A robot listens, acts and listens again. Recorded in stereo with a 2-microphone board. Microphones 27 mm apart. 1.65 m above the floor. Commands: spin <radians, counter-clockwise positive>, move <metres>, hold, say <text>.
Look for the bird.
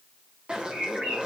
spin -0.96
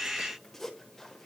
hold
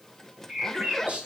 spin -0.96
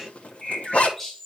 spin 0.17
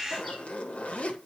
hold
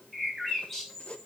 say Facing the bird.